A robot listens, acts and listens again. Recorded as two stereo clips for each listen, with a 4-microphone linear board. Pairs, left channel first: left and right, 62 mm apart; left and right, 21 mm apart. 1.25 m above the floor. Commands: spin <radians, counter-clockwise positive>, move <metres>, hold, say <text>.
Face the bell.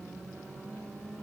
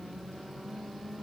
hold
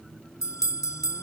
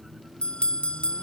spin 1.05
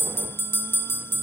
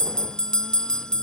spin 0.79
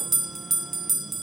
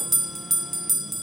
say Found it: a bell, straight ahead.